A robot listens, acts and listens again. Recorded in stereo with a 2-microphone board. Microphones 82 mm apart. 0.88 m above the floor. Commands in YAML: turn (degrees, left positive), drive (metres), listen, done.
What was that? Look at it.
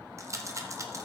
turn: -35
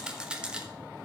turn: -10
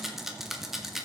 done: "Found it: a rattle, straight ahead."